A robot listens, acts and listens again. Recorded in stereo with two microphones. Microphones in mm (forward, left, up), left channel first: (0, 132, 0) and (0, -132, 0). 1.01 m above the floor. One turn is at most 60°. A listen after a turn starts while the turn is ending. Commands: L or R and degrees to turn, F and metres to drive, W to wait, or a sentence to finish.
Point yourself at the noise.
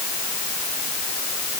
W
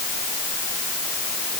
W
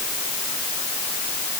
I can't make out anything to turn to.